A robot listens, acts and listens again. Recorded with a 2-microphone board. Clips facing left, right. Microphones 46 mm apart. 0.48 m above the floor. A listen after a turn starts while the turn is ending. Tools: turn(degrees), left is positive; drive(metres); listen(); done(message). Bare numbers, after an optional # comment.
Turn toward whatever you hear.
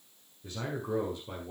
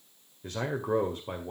# The man speaking: about 45° right or 135° right.
turn(-45)
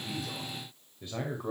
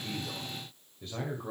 # So it is at 15° left.
turn(15)
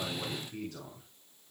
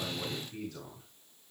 # The man speaking is now 10° left.
turn(10)
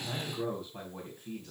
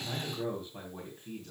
done("Found it: a man speaking, straight ahead, 2 to 4 m away.")